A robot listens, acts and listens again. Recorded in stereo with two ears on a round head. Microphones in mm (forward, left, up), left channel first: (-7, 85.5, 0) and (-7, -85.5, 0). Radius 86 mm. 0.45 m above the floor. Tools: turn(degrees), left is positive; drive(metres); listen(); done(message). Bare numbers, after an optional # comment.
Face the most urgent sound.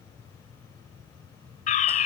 # The fire alarm: about 40° left or 140° left.
turn(40)
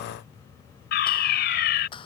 # So it is at 90° left.
turn(90)
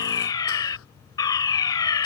# The fire alarm is now 25° left.
turn(25)
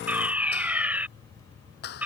# The fire alarm is now 10° right.
turn(-10)
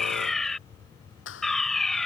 done("Facing the fire alarm.")